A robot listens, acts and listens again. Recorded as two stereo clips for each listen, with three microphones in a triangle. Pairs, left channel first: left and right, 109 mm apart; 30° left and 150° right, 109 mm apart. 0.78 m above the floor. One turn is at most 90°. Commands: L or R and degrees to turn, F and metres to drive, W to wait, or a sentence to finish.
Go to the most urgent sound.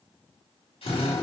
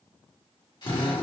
W
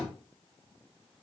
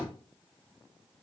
W
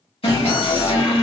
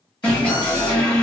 L90
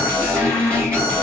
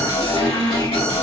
L15
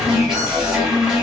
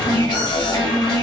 F1.0
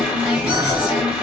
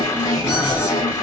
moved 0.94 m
R15
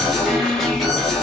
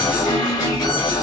F1.0
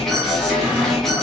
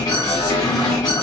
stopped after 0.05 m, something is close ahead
Arrived at the alarm, straight ahead.